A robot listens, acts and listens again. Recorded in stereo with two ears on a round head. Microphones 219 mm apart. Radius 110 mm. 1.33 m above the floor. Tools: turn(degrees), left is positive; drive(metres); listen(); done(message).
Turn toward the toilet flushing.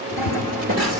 turn(degrees=-35)
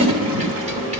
turn(degrees=-100)
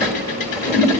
done("Found it: a toilet flushing, straight ahead, 1 to 2 m away.")